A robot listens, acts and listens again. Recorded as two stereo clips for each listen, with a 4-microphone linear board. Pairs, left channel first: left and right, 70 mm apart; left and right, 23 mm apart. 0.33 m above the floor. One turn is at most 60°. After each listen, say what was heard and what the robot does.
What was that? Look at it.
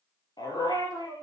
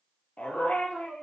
The dog barking: about 70° left or 110° left. Turn 60° left.
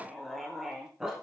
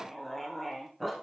Found it: a dog barking, straight ahead, 1 to 2 m away.